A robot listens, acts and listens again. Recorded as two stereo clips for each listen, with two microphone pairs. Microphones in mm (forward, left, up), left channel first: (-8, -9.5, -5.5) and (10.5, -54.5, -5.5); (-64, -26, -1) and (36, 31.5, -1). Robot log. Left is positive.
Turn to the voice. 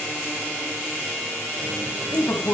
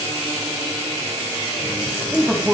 note: The man speaking: 115° left.
cmd yaw +115
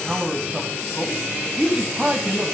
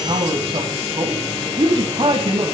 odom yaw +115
end: Found it: a man speaking, straight ahead.